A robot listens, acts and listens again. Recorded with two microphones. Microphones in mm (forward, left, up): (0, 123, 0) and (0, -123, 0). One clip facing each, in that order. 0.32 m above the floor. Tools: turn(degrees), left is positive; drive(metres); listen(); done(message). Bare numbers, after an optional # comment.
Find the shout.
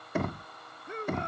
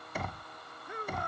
# The shout: about 25° left or 155° left.
turn(25)
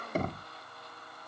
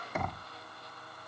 listen()
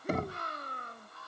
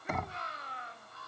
# So it is at 125° left.
turn(125)
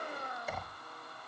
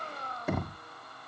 # The shout is now 15° left.
turn(15)
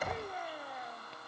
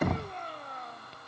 done("Facing the shout.")